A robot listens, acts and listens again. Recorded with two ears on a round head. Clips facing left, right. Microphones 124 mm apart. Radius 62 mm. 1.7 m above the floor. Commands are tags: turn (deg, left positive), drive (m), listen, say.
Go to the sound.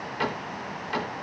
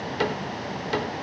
<turn deg="-45"/>
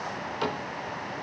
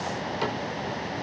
<drive m="1.0"/>
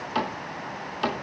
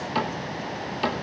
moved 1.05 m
<drive m="1.0"/>
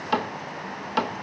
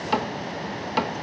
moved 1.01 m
<drive m="1.0"/>
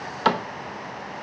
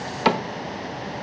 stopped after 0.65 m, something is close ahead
<turn deg="-15"/>
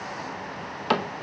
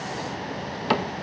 <say>Arrived at the cupboard door, straight ahead.</say>